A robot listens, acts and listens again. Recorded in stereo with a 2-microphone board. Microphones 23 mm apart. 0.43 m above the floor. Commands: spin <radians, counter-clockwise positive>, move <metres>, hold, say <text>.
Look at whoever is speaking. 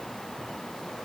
hold
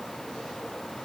hold
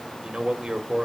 spin -0.79
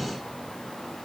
hold
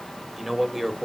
spin -0.17
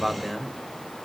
say Facing the man speaking, 1 to 2 m away.